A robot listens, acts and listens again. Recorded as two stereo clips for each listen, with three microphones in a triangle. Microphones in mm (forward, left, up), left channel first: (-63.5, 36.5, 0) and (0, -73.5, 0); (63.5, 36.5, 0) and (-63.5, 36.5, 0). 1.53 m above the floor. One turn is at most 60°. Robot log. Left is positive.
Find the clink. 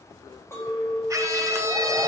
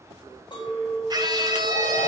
note: The clink: 50° left.
cmd yaw +50
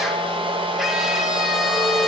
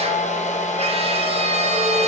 cmd idle
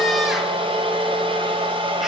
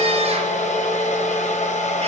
cmd idle
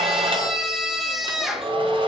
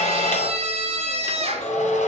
note: The clink is now 30° left.
cmd yaw +30
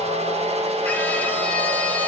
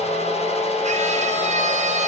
cmd idle
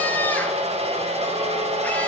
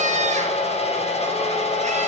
cmd idle
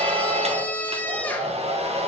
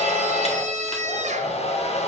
end: I heard a clink from this way, but can't make it out now.